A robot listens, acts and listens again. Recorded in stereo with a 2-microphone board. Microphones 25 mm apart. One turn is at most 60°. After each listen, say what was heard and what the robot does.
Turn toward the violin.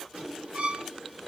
The violin: about 60° right or 120° right. Turn 60° right.
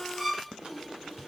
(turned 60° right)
Facing the violin, 1 to 2 m away.